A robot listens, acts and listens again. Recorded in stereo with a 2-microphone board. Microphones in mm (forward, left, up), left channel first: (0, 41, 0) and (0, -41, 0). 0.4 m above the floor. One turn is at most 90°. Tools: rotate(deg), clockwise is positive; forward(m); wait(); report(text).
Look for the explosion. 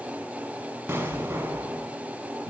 rotate(25)
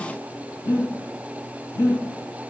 wait()
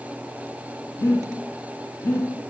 report("I heard an explosion, but can't make it out now. It was about straight ahead or 130° right.")